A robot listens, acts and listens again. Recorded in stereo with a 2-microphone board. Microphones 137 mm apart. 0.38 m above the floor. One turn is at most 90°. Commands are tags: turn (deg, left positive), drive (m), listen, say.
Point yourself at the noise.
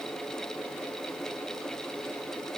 <listen/>
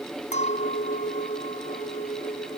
<turn deg="70"/>
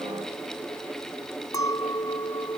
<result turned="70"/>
<turn deg="30"/>
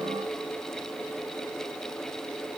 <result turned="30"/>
<listen/>
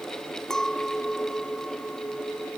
<say>Found it: a clink, straight ahead.</say>